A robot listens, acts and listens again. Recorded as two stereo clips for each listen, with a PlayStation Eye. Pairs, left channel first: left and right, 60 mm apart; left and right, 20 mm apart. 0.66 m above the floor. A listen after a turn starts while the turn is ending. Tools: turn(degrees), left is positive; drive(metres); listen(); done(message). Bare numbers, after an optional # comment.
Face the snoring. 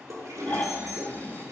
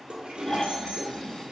# The snoring: about 30° left or 150° left.
turn(30)
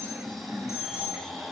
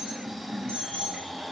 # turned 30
done("Found it: snoring, straight ahead.")